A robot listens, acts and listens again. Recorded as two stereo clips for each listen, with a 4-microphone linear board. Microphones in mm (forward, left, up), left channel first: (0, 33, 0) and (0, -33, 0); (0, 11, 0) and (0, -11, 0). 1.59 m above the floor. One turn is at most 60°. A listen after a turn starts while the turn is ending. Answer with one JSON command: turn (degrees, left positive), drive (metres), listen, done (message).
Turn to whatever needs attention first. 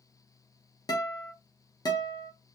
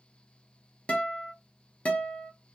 {"listen": true}
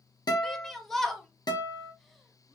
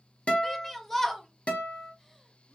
{"turn": 30}
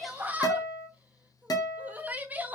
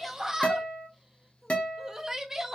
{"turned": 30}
{"turn": -25}
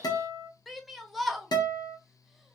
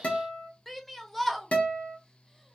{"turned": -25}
{"done": "Found it: a shout, straight ahead."}